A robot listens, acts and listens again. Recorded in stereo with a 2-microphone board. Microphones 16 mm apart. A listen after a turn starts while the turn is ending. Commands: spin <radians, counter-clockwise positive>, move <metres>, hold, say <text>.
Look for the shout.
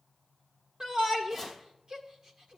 spin -0.96
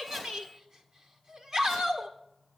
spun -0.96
spin -0.87
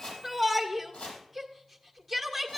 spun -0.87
say Facing the shout.